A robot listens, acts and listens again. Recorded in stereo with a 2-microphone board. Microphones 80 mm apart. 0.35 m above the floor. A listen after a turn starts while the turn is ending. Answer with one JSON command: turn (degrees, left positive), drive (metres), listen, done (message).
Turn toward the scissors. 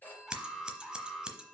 {"turn": -30}
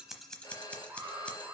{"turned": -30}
{"turn": 15}
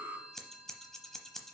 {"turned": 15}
{"done": "Facing the scissors, under 1 m away."}